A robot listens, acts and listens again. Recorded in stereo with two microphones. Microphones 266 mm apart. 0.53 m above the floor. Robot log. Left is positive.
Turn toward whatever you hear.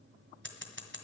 note: The scissors: about 45° right or 135° right.
cmd yaw -45
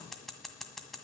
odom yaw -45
end: Found it: scissors, straight ahead, 1 to 2 m away.